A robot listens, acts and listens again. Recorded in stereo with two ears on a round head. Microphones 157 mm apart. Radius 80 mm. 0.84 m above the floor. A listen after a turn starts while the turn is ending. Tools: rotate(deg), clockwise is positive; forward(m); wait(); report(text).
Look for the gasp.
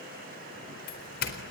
wait()
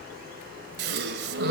rotate(60)
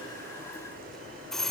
wait()
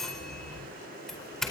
report("I heard a gasp, but can't make it out now. It was about straight ahead or 60° right.")